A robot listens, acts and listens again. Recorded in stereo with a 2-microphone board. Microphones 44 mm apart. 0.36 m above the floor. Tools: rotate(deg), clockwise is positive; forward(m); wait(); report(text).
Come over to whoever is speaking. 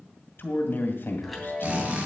rotate(-55)
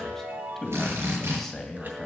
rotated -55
rotate(-10)
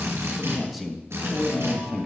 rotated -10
forward(1.0)
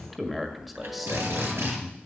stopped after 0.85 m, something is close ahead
report("I am next to the man speaking.")